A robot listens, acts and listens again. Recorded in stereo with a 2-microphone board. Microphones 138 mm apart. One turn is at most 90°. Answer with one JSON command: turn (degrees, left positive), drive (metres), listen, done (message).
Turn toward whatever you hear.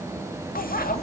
{"turn": 90}
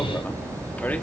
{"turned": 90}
{"turn": 10}
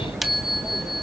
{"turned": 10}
{"done": "Found it: a bicycle bell, straight ahead."}